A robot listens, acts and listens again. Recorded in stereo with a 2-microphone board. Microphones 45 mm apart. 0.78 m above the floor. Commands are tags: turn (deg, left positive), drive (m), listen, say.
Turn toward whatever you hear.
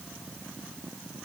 <listen/>
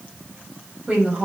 <turn deg="-25"/>
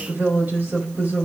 <turn deg="-135"/>
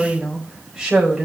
<turn deg="-10"/>
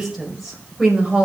<say>Facing the woman speaking.</say>